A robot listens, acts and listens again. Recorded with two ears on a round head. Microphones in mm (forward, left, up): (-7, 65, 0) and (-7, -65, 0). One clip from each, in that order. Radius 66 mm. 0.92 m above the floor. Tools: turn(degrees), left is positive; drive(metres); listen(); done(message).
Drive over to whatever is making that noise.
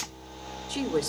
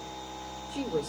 turn(degrees=90)
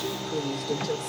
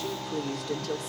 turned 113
turn(degrees=-25)
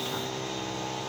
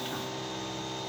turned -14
turn(degrees=-10)
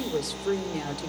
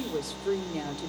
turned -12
drive(metres=1.0)
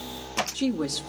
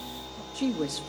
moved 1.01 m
drive(metres=1.0)
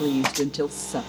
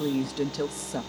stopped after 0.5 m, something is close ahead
done("I am next to the woman speaking.")